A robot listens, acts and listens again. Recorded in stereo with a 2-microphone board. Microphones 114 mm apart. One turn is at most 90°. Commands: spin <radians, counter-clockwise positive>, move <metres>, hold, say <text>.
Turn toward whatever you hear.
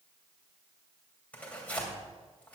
spin 0.52
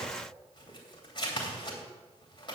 spin 1.57
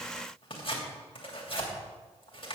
spin 0.96
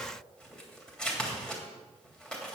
say Facing the tearing paper, 2 to 4 m away.